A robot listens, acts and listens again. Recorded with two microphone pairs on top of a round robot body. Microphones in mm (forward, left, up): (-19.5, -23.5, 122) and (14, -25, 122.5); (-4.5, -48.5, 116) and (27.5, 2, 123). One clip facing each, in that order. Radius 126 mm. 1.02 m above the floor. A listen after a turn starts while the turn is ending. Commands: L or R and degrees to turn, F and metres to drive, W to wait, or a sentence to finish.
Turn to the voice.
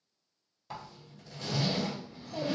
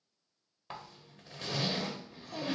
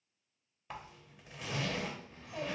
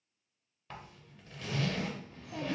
L35
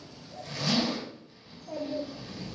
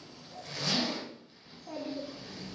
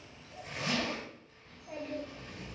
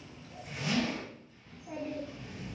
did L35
R10
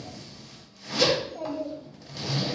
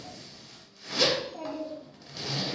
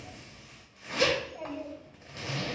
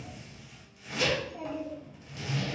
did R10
Facing the child speaking, 1 to 2 m away.